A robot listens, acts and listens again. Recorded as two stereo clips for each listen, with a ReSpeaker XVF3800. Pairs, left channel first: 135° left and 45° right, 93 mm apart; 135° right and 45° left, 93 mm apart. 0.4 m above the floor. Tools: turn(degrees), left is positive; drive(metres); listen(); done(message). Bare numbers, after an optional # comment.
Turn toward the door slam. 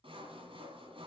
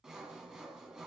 listen()
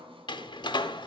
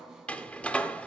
# The door slam: 150° left.
turn(150)
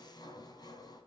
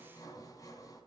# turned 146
done("I heard a door slam from this way, but can't make it out now.")